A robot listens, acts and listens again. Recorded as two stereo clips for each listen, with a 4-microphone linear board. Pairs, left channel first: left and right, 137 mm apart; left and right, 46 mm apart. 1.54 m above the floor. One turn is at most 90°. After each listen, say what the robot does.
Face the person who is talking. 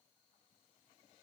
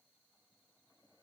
Keep listening.
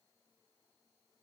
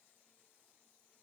Keep listening.
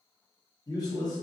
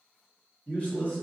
Turn 25° left.
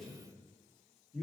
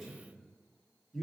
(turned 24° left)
Found it: a man speaking, straight ahead.